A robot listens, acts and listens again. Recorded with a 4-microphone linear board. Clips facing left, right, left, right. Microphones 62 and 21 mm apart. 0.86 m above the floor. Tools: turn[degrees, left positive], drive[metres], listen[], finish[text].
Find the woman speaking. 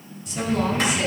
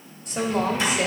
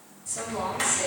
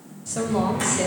Thought: The woman speaking: about 35° right or 145° right.
Action: turn[-35]
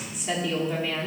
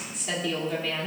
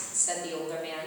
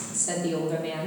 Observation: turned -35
Thought: So it is at 15° left.
Action: turn[15]
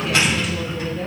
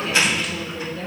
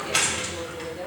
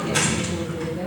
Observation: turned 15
Action: listen[]
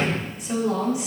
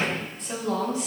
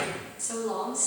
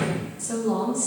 Thought: The woman speaking is now 15° left.
Action: turn[15]
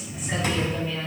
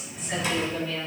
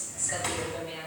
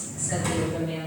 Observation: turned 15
Thought: The woman speaking is now 10° left.
Action: turn[10]
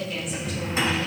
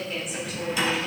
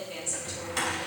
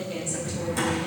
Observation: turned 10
Action: finish[Facing the woman speaking.]